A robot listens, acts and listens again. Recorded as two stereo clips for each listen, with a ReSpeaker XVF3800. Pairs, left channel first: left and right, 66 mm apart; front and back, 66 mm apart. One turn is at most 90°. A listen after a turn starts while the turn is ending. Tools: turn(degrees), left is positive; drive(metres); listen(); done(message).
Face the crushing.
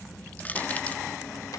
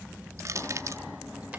turn(degrees=90)
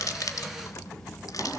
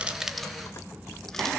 turn(degrees=60)
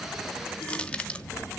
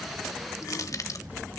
turn(degrees=20)
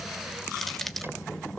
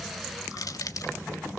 done("Facing the crushing, 1 to 2 m away.")